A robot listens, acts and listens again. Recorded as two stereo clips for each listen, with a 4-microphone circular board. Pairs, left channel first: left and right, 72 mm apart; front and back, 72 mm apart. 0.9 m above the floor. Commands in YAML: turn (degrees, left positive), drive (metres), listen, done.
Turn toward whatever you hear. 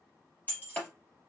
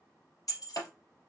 turn: 25
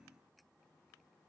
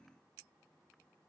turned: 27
done: "I heard breaking glass from this way, but can't make it out now."